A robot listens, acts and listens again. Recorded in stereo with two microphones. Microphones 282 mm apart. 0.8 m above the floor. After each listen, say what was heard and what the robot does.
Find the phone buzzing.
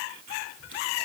Keep listening.
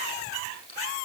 Keep listening.
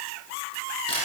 I can't make out a phone buzzing, only a camera shutter.